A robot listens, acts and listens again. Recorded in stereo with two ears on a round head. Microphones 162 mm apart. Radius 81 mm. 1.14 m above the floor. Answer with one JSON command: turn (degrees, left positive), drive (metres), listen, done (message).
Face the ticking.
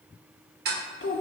{"turn": -55}
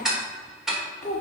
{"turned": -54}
{"done": "Facing the ticking, 1 to 2 m away."}